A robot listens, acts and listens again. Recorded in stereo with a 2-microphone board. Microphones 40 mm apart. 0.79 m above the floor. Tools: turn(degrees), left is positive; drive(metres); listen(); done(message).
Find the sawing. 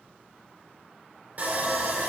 turn(degrees=-45)
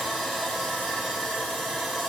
done("Facing the sawing, 1 to 2 m away.")